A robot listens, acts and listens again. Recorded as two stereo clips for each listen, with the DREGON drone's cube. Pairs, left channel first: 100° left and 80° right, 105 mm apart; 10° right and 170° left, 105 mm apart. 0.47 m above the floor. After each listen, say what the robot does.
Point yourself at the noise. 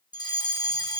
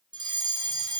Turn 140° left.
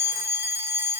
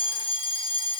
Turn 20° right.
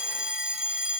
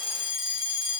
Found it: a fire alarm, straight ahead, 2 to 4 m away.